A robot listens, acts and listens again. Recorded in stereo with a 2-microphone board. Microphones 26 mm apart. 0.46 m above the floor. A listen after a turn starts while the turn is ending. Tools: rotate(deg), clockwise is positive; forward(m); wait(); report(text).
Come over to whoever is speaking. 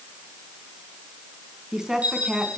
rotate(20)
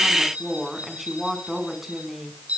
forward(1.0)
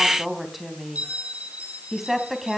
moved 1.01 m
forward(1.0)
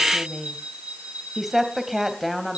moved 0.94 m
forward(1.0)
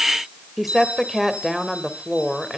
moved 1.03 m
forward(1.0)
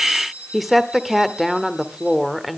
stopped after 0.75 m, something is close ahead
report("Arrived at the woman speaking, straight ahead.")